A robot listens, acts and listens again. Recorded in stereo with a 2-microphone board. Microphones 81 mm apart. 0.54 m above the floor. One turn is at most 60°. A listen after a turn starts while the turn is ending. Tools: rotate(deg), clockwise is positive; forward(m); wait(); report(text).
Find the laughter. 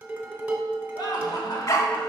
rotate(-60)
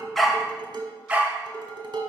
wait()
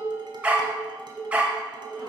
wait()
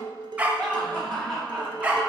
rotate(-10)
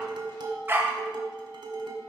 wait()
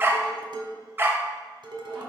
wait()
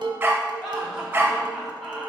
report("Facing the laughter.")